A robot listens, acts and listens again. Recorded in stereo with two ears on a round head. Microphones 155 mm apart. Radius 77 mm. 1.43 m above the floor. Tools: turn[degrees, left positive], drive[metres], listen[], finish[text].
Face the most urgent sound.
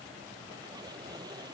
Action: listen[]
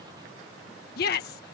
Thought: The shout: about 60° left or 120° left.
Action: turn[60]
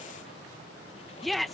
Action: finish[Facing the shout.]